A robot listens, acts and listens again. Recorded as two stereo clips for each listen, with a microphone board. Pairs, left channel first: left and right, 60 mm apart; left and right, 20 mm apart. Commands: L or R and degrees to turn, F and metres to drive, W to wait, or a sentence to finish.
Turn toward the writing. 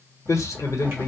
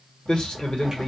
L25
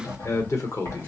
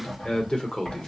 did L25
L130
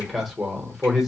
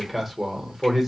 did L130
W
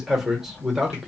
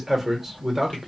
L40
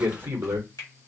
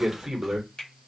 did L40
Found it: writing, straight ahead.